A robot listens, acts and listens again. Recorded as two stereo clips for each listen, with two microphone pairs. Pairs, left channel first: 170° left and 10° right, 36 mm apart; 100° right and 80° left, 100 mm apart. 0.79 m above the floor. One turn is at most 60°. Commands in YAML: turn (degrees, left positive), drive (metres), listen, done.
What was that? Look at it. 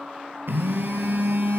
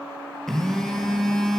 turn: -15
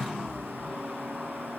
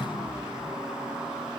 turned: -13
done: "Facing the phone buzzing, 2 to 4 m away."